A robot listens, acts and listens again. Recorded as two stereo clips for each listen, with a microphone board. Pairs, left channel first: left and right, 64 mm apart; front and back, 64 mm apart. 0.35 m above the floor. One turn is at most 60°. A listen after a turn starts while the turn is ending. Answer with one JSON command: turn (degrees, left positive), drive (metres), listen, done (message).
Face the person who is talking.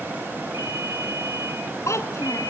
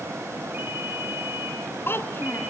{"turn": 55}
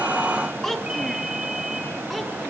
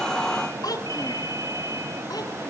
{"done": "Found it: a child speaking, straight ahead."}